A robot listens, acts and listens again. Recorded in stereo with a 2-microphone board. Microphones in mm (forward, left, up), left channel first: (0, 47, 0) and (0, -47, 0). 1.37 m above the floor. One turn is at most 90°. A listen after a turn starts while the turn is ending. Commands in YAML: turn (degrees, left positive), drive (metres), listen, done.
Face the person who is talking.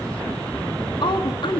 turn: 60
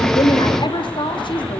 turn: 60
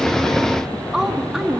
done: "Facing the woman speaking, 2 to 4 m away."